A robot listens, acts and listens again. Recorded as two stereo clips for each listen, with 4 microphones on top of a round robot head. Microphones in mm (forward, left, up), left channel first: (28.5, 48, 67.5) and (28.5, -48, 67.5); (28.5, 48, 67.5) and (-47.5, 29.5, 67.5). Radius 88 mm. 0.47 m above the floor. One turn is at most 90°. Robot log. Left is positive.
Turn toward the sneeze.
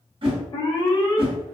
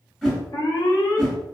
cmd idle
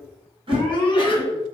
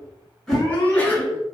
note: The sneeze: 80° left.
cmd yaw +80
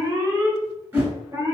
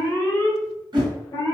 end: Facing where the sneeze came from. I can't hear it now.